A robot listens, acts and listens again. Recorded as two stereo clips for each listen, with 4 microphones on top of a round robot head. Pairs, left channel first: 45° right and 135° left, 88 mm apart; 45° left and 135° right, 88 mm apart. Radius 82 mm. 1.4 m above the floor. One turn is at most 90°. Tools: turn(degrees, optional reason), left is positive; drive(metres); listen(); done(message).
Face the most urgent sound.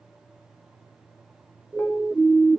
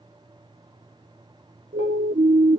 turn(degrees=-90, reason="The siren: 145° right.")
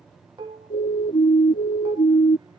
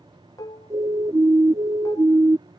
turn(degrees=-80, reason="The siren is now 80° right.")
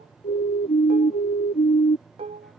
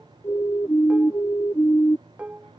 turn(degrees=-25, reason="The siren is now 25° right.")
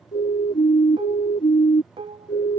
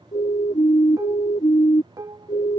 done("Facing the siren.")